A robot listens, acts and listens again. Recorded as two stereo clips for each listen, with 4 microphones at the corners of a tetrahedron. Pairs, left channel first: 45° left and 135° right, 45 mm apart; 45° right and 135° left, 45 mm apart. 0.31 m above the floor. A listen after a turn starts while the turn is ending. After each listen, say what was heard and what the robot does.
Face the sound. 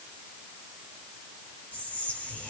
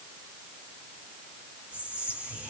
The whispering: 85° left. Turn 85° left.
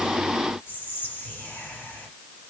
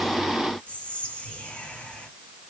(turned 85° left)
The whispering is now 15° left. Turn 15° left.
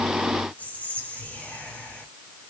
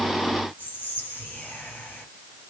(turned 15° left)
Facing the whispering.